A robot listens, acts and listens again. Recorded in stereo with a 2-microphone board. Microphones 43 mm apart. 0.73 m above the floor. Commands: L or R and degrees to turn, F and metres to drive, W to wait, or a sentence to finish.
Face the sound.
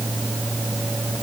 W
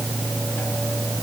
W
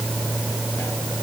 I can't make out anything.